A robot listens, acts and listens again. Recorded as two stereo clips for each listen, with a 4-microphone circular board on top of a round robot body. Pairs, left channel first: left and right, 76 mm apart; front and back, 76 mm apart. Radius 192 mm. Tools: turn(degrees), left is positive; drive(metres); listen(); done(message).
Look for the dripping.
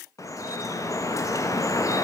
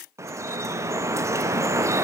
turn(degrees=130)
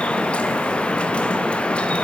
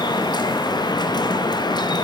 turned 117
turn(degrees=15)
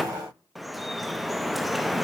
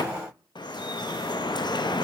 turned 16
done("Found it: dripping, straight ahead, under 1 m away.")